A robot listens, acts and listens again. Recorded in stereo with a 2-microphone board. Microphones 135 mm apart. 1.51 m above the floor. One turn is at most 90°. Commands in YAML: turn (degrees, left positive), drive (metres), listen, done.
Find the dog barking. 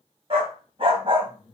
turn: -40
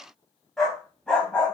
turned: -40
turn: 10
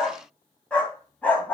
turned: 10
turn: 10
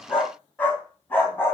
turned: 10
turn: 15
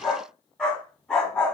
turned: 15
done: "Found it: a dog barking, straight ahead."